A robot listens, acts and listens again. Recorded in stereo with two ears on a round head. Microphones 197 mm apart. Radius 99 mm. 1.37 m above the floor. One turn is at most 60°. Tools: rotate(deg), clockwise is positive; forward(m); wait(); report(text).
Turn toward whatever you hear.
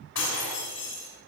rotate(-60)
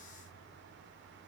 wait()
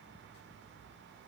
report("I heard breaking glass, but can't make it out now. It was about straight ahead or 60° left.")